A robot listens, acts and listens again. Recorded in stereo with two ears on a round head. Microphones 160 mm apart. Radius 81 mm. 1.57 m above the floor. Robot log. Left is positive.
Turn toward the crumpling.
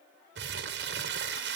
note: The crumpling: about 60° right or 120° right.
cmd yaw -60
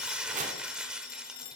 end: Found it: crumpling, straight ahead, under 1 m away.